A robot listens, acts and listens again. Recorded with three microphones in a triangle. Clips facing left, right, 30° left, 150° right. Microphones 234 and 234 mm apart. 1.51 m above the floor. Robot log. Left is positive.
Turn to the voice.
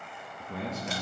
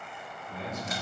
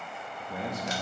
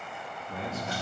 note: The man speaking: 100° left.
cmd yaw +100
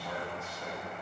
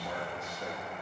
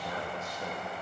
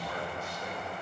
note: The man speaking is now 20° right.
cmd yaw -20
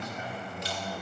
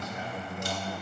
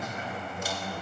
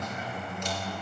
note: The man speaking is now 15° right.
cmd yaw -15
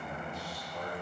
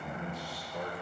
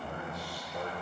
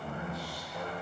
note: The man speaking is now 10° right.
cmd yaw -10
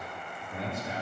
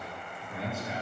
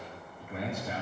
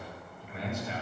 end: Found it: a man speaking, straight ahead.